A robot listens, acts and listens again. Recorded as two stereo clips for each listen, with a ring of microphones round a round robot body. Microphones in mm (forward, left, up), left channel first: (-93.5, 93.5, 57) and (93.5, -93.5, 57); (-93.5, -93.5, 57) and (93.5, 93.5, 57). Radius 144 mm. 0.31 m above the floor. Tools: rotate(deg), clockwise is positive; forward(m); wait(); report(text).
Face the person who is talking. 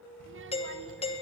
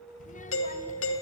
rotate(80)
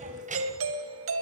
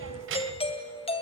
rotate(-15)
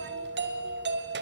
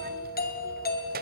wait()
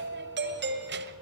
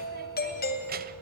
wait()
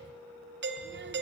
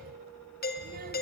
report("Facing where the child speaking came from. I can't hear it now.")